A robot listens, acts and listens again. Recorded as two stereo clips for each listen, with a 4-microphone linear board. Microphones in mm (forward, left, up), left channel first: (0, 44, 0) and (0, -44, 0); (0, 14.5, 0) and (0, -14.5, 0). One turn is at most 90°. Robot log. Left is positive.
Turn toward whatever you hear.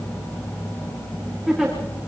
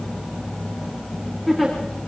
cmd yaw +30
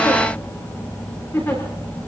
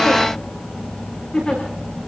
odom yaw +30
note: So it is at 150° left.
cmd yaw +90
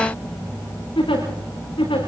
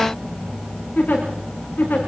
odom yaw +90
note: The giggle is now 75° left.
cmd yaw +75
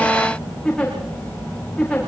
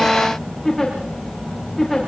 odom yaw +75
note: The giggle is now 10° left.
cmd yaw +10
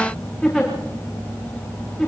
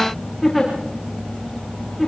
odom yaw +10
end: Facing the giggle.